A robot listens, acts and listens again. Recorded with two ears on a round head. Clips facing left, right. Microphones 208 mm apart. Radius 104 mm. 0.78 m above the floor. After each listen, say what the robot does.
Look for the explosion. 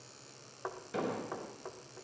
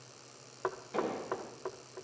Turn 15° left.
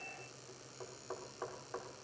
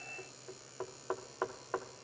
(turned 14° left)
Keep listening.
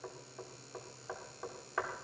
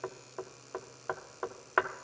I heard an explosion, but can't make it out now. It was about straight ahead or 150° left.